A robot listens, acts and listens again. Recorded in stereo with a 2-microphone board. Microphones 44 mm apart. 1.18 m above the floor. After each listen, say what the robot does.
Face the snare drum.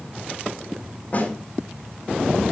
Turn 35° left.
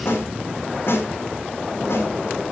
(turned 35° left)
Turn 110° left.
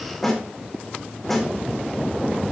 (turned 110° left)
Turn 10° left.
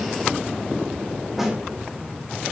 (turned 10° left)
Facing the snare drum, over 4 m away.